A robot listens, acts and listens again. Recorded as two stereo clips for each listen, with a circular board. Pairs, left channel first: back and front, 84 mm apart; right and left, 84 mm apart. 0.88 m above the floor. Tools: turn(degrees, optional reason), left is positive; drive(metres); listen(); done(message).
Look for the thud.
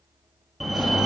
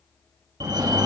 listen()
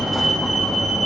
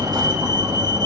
listen()
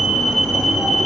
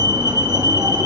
done("I can't make out a thud, only a fire alarm.")